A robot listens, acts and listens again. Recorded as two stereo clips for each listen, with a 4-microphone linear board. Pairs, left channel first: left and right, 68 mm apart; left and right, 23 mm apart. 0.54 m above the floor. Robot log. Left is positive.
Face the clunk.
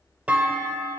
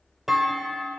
note: The clunk: about 20° right or 160° right.
cmd yaw -20
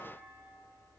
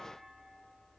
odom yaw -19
cmd idle
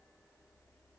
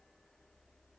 end: I heard a clunk, but can't make it out now. It was about straight ahead or 140° right.